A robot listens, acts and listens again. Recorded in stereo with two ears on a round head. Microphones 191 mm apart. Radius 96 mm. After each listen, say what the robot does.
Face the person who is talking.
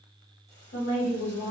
Turn 55° left.
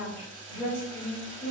Turn 30° left.
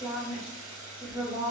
Turn 20° right.
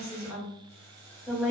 Found it: a woman speaking, straight ahead, 1 to 2 m away.